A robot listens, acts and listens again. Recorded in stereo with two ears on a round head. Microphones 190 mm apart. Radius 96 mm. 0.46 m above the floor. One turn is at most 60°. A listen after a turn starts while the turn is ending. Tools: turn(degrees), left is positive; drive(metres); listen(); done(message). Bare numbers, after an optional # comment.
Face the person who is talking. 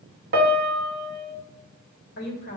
# The woman speaking: about 50° left or 130° left.
turn(50)
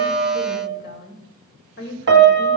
# So it is at 65° left.
turn(60)
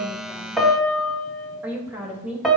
# The woman speaking is now 10° right.
turn(-10)
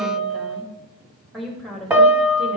done("Found it: a woman speaking, straight ahead.")